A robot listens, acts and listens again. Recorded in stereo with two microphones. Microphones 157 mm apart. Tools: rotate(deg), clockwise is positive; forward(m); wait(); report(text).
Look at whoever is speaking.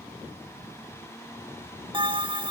wait()
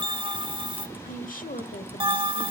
rotate(-60)
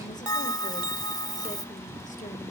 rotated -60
wait()
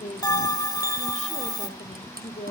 rotate(-55)
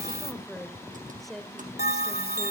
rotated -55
report("Found it: a woman speaking, straight ahead, 1 to 2 m away.")